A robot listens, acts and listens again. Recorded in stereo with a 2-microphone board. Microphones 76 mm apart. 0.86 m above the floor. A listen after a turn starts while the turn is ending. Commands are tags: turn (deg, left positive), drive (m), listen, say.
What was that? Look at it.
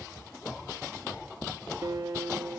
<turn deg="-65"/>
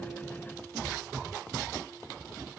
<listen/>
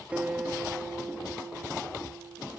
<turn deg="-20"/>
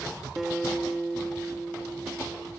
<say>Facing the guitar.</say>